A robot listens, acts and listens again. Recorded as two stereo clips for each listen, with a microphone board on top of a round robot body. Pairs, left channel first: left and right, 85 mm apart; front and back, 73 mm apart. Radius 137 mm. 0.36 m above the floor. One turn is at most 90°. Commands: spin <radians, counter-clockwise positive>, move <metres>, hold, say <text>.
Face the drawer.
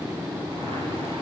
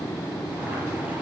hold
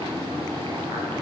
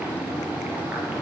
hold
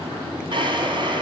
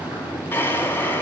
spin -1.05
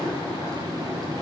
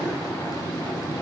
hold
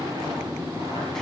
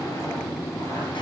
hold
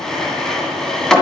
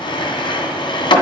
say Found it: a drawer, straight ahead.